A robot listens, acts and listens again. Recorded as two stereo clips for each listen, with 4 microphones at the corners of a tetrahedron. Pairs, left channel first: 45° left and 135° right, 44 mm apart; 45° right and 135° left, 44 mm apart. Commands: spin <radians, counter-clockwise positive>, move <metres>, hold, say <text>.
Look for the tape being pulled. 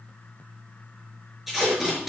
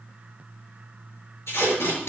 spin -0.87
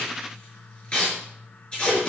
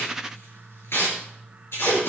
spin -0.35
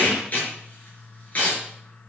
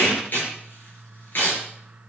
say Facing the tape being pulled.